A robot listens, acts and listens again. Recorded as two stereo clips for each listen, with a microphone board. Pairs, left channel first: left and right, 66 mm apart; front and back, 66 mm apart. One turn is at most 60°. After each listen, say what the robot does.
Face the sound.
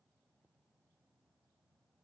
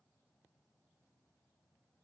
Keep listening.
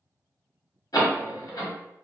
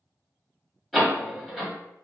Turn 60° left.
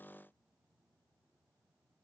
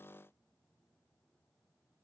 Turn 30° left.
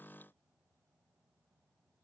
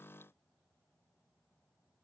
I heard a door slam from this way, but can't make it out now.